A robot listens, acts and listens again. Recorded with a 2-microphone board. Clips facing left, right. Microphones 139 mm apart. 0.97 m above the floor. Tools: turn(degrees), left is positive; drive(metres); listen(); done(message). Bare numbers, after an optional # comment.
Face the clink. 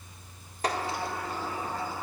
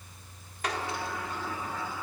listen()
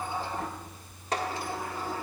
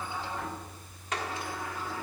listen()
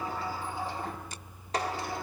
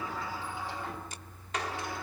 done("I can't make out a clink to turn to.")